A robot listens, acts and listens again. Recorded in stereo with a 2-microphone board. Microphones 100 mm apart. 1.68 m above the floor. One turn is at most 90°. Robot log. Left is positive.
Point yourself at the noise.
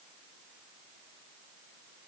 cmd idle
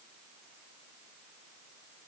cmd idle
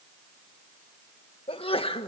note: The sneeze: about 65° left or 115° left.
cmd yaw +65
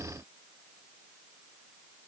cmd idle
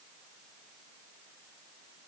end: I heard a sneeze, but can't make it out now. It was about straight ahead or 50° left.